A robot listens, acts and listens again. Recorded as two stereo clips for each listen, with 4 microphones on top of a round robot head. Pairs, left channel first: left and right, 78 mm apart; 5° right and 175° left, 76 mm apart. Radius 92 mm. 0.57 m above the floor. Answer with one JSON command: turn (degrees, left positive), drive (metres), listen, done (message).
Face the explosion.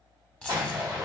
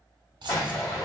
{"turn": -50}
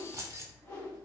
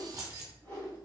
{"done": "Facing where the explosion came from. I can't hear it now."}